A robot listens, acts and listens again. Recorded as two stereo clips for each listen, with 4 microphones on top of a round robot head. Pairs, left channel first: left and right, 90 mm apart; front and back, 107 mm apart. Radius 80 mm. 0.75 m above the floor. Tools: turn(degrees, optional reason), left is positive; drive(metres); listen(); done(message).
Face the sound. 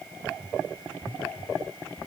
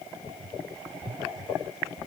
listen()
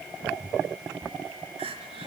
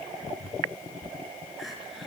turn(degrees=-90, reason="The crying: 90° right.")
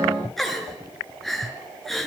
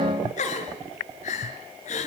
done("Facing the crying, over 4 m away.")